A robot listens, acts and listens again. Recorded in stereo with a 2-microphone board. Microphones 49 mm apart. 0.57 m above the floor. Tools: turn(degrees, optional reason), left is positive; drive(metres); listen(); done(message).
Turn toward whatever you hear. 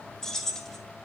turn(degrees=30)
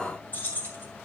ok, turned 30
turn(degrees=135, reason="So it is at 135° left.")
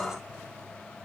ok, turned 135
listen()
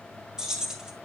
turn(degrees=-15, reason="The keys jangling is now 15° right.")
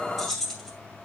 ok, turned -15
done("Facing the keys jangling, 2 to 4 m away.")